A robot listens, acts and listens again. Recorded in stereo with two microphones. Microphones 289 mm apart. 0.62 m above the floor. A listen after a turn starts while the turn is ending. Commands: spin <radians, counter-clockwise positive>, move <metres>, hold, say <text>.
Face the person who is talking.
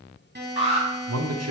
spin -1.05
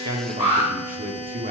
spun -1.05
spin -0.61
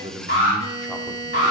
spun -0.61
hold
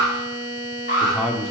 say Found it: a man speaking, straight ahead, 1 to 2 m away.